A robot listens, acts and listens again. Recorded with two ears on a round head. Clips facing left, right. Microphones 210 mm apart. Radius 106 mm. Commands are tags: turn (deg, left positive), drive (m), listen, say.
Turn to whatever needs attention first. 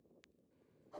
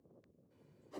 <listen/>
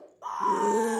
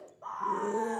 <turn deg="55"/>
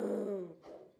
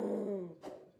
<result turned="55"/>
<turn deg="10"/>
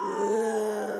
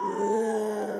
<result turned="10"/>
<say>Facing the scream.</say>